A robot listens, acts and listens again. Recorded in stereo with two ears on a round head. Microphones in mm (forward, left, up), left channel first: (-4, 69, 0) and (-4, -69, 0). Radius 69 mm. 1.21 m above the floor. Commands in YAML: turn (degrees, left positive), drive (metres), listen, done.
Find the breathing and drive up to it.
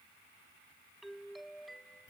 listen: true
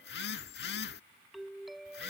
listen: true
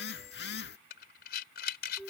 turn: 65
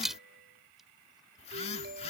drive: 1.0
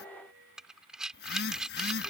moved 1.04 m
drive: 1.0
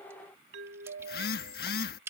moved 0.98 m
turn: -15
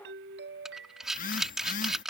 drive: 1.0
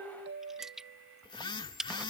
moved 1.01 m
drive: 1.0
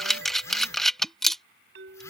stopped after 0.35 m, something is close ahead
done: "I am next to the breathing."